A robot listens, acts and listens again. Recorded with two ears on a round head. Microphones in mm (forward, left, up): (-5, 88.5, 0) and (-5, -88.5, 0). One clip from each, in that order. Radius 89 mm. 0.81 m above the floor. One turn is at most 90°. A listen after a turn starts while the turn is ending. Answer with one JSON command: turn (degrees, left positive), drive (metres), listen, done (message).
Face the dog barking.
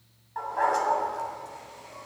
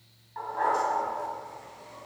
{"turn": 30}
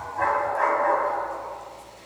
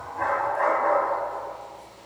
{"turn": 20}
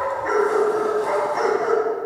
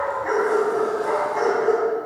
{"turn": 15}
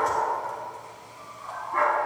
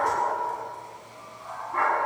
{"turn": 10}
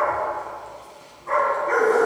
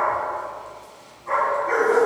{"done": "Found it: a dog barking, straight ahead."}